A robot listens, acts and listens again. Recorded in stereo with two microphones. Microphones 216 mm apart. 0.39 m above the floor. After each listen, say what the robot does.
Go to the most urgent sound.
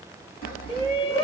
Turn 30° left.
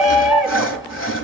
Drive 1.0 m forward.
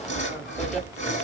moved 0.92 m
Keep listening.
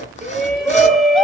Drive 1.0 m forward.
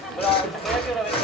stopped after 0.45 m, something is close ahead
Arrived at the shout, straight ahead.